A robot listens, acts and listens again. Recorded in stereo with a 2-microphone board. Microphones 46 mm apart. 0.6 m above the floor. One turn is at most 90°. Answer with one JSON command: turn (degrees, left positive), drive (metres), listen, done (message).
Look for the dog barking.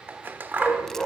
{"turn": 30}
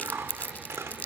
{"listen": true}
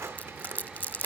{"listen": true}
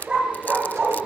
{"turn": -20}
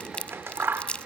{"listen": true}
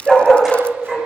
{"turn": -10}
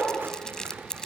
{"done": "Found it: a dog barking, straight ahead, over 4 m away."}